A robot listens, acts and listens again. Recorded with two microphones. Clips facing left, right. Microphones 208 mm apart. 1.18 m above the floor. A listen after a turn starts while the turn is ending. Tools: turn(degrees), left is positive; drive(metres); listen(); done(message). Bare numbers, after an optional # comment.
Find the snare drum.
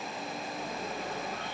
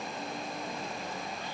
listen()
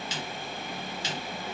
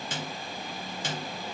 # The snare drum: about 55° right or 125° right.
turn(-55)
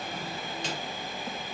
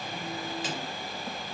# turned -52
listen()
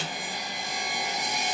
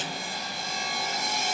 done("Facing the snare drum, 2 to 4 m away.")